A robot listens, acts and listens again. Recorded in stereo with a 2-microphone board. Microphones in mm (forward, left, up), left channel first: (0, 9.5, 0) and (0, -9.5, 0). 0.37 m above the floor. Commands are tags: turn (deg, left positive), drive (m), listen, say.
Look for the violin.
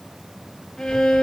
<turn deg="50"/>
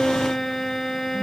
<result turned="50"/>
<turn deg="65"/>
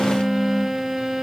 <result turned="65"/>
<say>Found it: a violin, straight ahead.</say>